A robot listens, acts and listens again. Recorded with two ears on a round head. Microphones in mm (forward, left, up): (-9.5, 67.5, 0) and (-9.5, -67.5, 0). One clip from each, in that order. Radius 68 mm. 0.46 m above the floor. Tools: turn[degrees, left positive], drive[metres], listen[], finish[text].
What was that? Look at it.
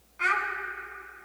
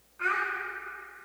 Thought: The child speaking: about 70° left or 110° left.
Action: turn[70]
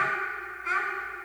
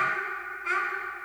Action: finish[Found it: a child speaking, straight ahead.]